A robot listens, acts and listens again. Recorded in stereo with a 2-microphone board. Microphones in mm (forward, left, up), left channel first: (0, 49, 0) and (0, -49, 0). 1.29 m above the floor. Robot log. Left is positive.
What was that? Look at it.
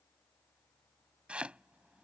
cmd yaw -30
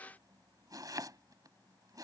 note: So it is at 140° right.
cmd yaw -140
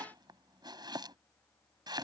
note: The chopping is now 50° right.
cmd yaw -50
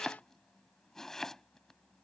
end: Found it: chopping, straight ahead.